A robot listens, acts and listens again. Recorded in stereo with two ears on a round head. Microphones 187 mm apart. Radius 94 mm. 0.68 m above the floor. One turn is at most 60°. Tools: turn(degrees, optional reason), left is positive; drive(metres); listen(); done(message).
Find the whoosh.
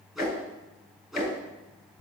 turn(degrees=30)
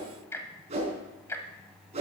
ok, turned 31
turn(degrees=-30, reason="So it is at 30° right.")
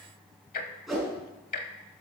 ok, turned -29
done("Facing the whoosh.")